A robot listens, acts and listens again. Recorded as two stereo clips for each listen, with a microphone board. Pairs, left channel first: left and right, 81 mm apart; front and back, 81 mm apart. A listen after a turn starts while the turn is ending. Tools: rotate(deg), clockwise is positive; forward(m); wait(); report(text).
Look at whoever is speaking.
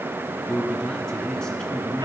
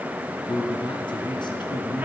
rotate(-10)
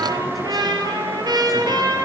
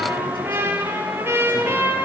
wait()
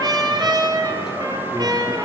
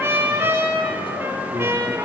wait()
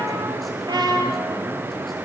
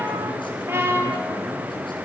report("I heard a man speaking from this way, but can't make it out now.")